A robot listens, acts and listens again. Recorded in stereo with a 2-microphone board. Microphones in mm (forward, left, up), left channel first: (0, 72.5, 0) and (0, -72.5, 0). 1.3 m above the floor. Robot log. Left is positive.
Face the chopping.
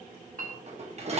cmd idle
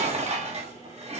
cmd idle
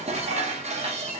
end: I can't make out chopping to turn to.